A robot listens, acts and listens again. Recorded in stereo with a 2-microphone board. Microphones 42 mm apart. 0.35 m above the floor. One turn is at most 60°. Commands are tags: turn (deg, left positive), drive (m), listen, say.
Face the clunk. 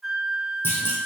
<turn deg="60"/>
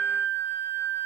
<listen/>
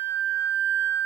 <say>I heard a clunk, but can't make it out now. It was about 10° left or 50° left.</say>